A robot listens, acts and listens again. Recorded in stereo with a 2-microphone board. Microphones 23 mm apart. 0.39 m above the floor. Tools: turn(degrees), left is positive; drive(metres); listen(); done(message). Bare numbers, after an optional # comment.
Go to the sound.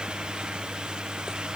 listen()
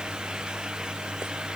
listen()
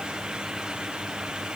done("I can't make out anything.")